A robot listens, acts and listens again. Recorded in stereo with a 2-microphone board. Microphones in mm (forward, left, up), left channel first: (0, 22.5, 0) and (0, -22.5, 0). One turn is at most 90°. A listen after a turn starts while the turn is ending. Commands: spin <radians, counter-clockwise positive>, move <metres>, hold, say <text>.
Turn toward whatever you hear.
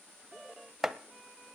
spin -0.52
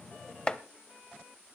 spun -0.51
spin 0.44
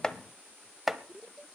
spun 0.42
say Facing the chopping, under 1 m away.